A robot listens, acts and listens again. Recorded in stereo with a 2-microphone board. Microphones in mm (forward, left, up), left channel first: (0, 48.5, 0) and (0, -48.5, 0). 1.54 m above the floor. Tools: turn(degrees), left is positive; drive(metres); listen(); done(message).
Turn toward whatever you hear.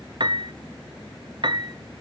turn(degrees=-55)
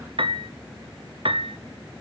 turn(degrees=-70)
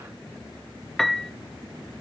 done("Facing the piano, under 1 m away.")